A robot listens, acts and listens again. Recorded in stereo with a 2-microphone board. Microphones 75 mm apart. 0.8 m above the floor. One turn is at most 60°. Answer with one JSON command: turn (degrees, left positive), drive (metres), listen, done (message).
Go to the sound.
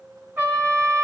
{"turn": -30}
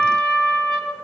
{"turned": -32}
{"drive": 1.0}
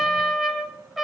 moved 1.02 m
{"drive": 1.0}
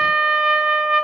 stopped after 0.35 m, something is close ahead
{"turn": -10}
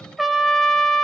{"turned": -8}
{"done": "Arrived at the trumpet, straight ahead."}